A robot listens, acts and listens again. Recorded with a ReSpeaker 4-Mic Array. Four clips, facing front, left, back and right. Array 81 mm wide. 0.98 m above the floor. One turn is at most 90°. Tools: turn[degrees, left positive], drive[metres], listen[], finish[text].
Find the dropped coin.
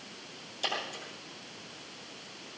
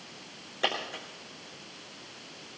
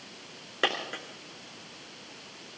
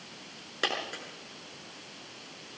Thought: The dropped coin: 165° right.
Action: turn[-90]
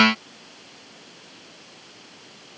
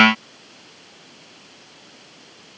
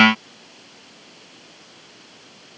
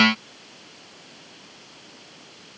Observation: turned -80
Thought: Nothing new. It was at 85° right.
Action: turn[-85]
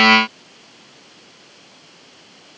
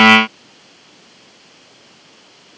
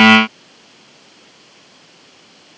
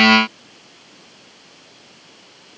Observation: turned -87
Action: finish[I heard a dropped coin from this way, but can't make it out now.]